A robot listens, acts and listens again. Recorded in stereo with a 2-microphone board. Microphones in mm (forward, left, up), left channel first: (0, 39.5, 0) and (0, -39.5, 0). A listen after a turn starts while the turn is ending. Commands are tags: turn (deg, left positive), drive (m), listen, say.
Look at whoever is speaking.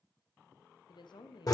<turn deg="70"/>
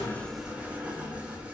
<listen/>
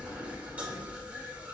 <listen/>
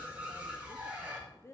<turn deg="35"/>
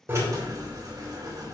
<listen/>
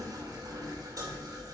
<listen/>
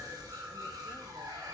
<say>Facing where the woman speaking came from. I can't hear it now.</say>